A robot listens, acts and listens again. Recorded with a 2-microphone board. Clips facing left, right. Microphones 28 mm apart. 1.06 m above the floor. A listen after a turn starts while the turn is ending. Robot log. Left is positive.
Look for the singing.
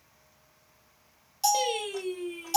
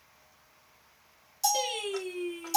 cmd yaw +30
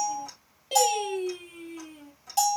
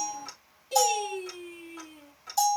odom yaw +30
note: So it is at 135° left.
cmd yaw +135
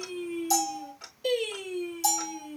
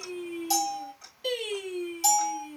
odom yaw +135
note: The singing is now 20° right.
cmd yaw -20
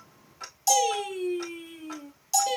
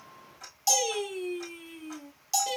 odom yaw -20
end: Found it: singing, straight ahead, over 4 m away.